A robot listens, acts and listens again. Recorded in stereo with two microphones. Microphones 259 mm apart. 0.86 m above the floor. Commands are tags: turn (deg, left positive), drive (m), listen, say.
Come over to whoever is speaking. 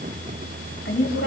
<turn deg="45"/>
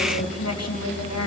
<turn deg="90"/>
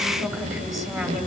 <drive m="1.0"/>
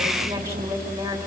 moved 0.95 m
<turn deg="-10"/>
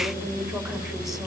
<listen/>
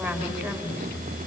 <drive m="1.0"/>
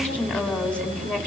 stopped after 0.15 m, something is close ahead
<say>Blocked. The woman speaking is further on, straight ahead.</say>